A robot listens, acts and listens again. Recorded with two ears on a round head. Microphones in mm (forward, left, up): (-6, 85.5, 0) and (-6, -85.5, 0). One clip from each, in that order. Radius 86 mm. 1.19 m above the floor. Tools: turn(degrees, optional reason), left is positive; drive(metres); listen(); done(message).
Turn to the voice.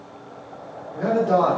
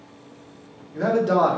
turn(degrees=-35, reason="The man speaking: about 35° right or 145° right.")
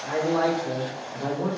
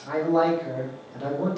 done("Found it: a man speaking, straight ahead.")